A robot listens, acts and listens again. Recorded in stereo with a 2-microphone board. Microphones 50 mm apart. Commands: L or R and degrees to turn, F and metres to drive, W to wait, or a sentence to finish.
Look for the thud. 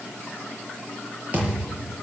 R30
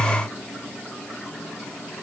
W
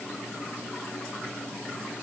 I heard a thud, but can't make it out now. It was about straight ahead or 120° right.